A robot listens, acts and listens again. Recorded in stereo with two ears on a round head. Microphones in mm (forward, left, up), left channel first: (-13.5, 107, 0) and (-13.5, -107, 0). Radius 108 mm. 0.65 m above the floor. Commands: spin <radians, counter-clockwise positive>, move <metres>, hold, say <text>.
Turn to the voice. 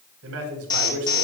spin -1.13
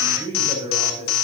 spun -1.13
spin -0.44
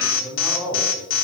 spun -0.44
spin -0.26
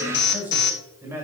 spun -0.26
spin -0.17
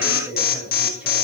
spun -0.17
say Found it: a man speaking, straight ahead.